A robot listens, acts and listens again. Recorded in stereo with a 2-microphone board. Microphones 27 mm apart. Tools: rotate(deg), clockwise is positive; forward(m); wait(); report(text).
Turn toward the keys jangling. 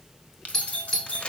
rotate(-65)
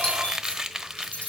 rotate(-60)
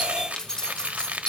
rotate(-30)
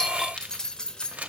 rotate(-30)
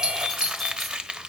wait()
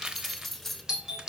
report("Facing the keys jangling, 1 to 2 m away.")